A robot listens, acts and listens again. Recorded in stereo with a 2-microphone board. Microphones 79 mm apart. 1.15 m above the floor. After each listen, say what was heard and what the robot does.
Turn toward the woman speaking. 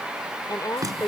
The woman speaking: about 55° left or 125° left. Turn 55° left.
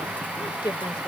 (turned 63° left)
So it is at 70° left. Turn 70° left.
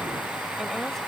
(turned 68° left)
Keep listening.
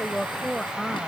Found it: a woman speaking, straight ahead.